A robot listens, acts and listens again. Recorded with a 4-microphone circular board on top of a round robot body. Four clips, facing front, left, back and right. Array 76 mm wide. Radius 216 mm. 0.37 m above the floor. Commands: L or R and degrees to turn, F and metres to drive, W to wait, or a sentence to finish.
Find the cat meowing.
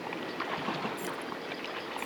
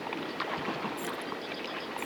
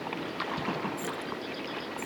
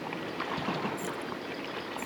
W
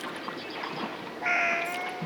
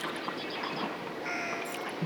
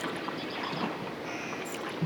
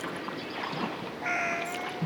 R20
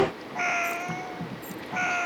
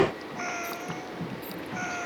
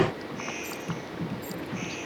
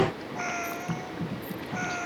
Found it: a cat meowing, straight ahead.